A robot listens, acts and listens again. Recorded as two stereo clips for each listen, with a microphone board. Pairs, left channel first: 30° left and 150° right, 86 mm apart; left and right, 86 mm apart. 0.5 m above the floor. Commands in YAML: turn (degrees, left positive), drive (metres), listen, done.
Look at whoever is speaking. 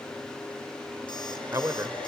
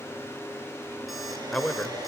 turn: 165
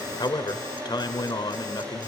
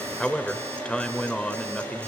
turn: 15
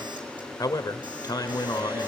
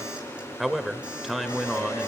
done: "Found it: a man speaking, straight ahead."